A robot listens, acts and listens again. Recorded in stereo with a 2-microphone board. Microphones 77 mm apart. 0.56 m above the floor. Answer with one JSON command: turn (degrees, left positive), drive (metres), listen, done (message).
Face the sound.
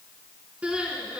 {"turn": -15}
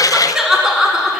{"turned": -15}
{"done": "Facing the crying, 1 to 2 m away."}